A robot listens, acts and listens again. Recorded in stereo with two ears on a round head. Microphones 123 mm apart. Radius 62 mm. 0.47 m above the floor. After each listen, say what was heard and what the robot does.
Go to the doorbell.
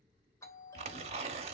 The doorbell: about 20° left or 160° left. Turn 20° left.
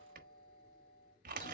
So it is at 135° left. Turn 135° left.
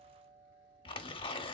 The doorbell is now 20° right. Turn 20° right.
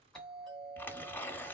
Drive 1.0 m forward.
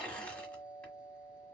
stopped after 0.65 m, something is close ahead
I am next to the doorbell.